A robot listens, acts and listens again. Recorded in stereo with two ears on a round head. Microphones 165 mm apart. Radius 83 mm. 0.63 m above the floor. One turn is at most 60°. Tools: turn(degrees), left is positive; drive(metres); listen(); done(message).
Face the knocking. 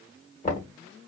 turn(degrees=40)
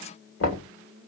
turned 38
turn(degrees=60)
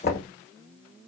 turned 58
turn(degrees=45)
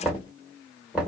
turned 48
done("Found it: knocking, straight ahead.")